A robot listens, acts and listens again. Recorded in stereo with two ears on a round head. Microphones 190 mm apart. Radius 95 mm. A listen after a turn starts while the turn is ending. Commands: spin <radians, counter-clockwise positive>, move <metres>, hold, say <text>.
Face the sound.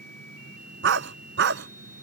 spin -1.05
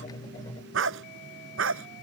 spin -1.22
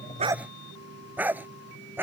spin -0.17
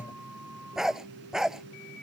say Found it: a dog barking, straight ahead.